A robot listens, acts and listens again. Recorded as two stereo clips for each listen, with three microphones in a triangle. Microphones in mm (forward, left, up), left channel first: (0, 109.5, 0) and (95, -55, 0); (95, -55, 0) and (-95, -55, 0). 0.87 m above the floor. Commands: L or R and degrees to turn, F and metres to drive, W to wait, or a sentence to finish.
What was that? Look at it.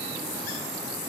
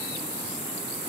W
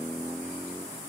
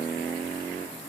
W
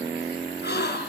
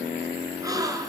L110
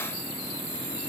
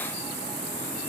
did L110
Facing where the gasp came from. I can't hear it now.